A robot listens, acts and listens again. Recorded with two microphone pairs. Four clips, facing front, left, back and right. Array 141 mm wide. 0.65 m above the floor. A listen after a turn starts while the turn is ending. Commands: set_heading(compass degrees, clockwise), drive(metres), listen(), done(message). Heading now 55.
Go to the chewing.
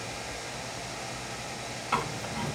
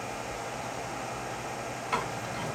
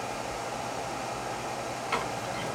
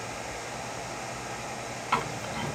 set_heading(140)
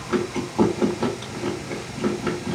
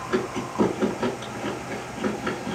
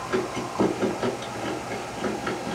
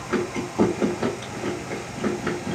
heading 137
drive(1.0)
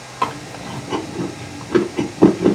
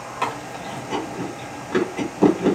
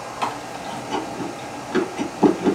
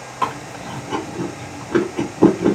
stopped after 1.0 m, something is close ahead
done("I am next to the chewing.")